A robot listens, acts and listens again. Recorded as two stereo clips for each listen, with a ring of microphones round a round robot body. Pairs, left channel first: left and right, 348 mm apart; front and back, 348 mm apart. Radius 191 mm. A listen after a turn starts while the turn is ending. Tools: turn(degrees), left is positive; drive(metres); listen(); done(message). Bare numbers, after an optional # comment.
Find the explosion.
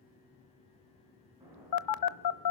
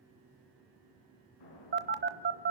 # The explosion: 10° right.
turn(-10)
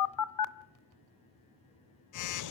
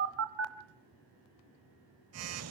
done("Facing where the explosion came from. I can't hear it now.")